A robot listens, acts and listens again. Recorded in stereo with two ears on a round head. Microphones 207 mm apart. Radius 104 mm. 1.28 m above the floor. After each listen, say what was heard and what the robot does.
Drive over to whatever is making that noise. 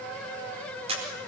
The camera shutter: about 25° right or 155° right. Turn 25° right.
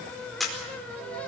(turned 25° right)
Drive 1.0 m forward.
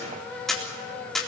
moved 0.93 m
Drive 1.0 m forward.
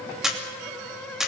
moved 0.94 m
Drive 1.0 m forward.
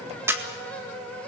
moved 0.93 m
The camera shutter is now 10° right. Turn 10° right.
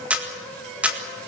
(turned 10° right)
Drive 1.0 m forward.
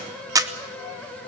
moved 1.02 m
The camera shutter is now 15° right. Turn 15° right.
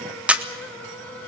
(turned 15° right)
Drive 1.0 m forward.
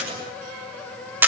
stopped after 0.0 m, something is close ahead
The camera shutter is now 10° right. Turn 10° right.
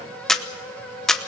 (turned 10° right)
I am next to the camera shutter.